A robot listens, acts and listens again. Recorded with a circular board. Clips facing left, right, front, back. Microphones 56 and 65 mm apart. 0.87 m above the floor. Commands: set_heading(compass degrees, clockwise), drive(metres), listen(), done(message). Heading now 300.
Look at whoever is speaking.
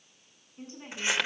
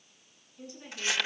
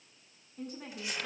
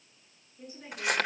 set_heading(265)
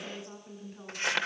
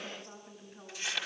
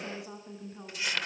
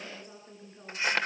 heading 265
done("Facing the woman speaking.")